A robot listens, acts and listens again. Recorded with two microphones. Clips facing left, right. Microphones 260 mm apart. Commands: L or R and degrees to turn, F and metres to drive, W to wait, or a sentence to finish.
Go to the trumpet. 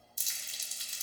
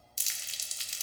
W
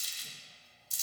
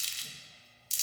W
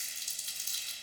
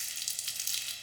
I can't make out a trumpet to turn to.